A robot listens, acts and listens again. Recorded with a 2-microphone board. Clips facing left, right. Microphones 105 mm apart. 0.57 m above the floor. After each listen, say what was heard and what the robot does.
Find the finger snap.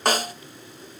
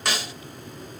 Keep listening.
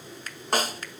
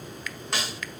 The finger snap: about 40° left or 140° left. Turn 40° left.
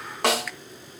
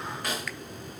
Keep listening.
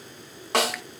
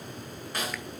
Keep listening.
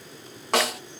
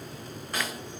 I heard a finger snap, but can't make it out now. It was about straight ahead or 100° left.